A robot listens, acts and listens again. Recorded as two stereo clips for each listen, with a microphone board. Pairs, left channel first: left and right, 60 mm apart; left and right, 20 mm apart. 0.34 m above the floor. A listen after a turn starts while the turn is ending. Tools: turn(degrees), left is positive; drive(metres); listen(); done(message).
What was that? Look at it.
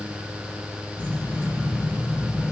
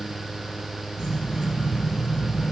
turn(degrees=-25)
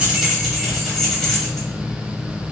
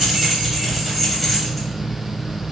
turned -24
turn(degrees=20)
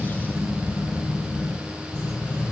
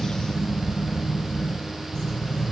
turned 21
turn(degrees=35)
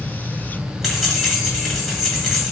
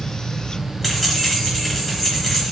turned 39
done("Facing the keys jangling, 1 to 2 m away.")